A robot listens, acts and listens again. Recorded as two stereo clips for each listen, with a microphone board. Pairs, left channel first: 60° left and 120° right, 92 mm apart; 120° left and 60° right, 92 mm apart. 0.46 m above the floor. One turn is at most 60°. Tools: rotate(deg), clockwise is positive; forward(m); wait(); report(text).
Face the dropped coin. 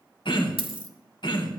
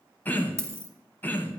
rotate(60)
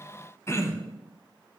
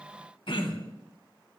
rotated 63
rotate(60)
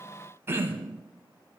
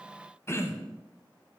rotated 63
report("Facing where the dropped coin came from. I can't hear it now.")